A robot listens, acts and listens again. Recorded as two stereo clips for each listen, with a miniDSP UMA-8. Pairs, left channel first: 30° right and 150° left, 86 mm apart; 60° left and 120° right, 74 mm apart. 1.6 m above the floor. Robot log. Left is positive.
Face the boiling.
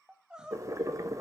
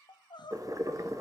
note: The boiling: 160° right.
cmd yaw -160
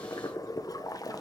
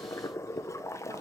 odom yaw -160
note: The boiling is now 10° left.
cmd yaw +10
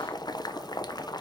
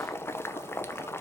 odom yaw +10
end: Facing the boiling, under 1 m away.